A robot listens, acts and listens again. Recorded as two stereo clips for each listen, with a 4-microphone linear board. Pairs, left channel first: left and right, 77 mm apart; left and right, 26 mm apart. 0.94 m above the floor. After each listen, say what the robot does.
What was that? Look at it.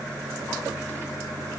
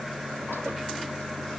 Keep listening.
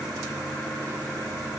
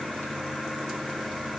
Keep listening.
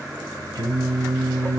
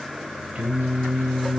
Turn 90° right.
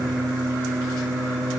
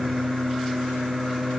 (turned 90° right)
Facing the singing.